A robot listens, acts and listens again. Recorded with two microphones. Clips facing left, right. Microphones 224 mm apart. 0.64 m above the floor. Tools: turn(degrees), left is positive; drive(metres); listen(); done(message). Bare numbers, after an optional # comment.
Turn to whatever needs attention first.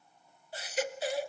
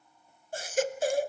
# The baby crying: about 50° right or 130° right.
turn(-50)
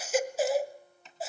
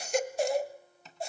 done("Found it: a baby crying, straight ahead.")